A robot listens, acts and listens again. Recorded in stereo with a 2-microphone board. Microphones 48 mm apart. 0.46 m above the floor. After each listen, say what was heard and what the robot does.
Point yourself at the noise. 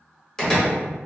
Turn 30° left.
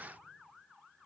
Keep listening.
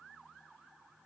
I heard a door slam, but can't make it out now. It was about 15° right or 135° left.